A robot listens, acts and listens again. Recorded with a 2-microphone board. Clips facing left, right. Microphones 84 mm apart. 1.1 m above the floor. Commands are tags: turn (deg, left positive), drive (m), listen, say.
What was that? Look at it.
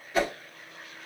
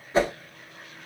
<turn deg="-30"/>
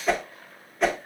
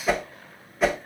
<say>Facing the whoosh.</say>